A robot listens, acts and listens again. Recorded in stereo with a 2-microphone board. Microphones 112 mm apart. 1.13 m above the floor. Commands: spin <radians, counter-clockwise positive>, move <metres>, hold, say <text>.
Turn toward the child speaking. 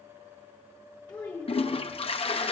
spin 0.52
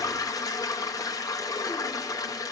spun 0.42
hold
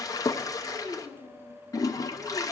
spin -0.52
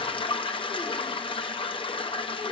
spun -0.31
hold
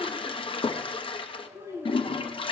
spin -0.44
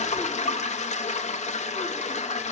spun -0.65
hold
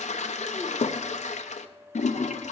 hold
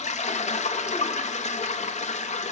say I heard a child speaking, but can't make it out now. It was about 10° left or 115° right.